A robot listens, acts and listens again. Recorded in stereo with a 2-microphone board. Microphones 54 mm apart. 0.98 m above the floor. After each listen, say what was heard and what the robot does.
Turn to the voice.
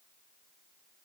Keep listening.
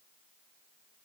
Keep listening.
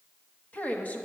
The woman speaking: about 30° left or 150° left. Turn 30° left.
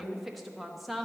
Found it: a woman speaking, straight ahead.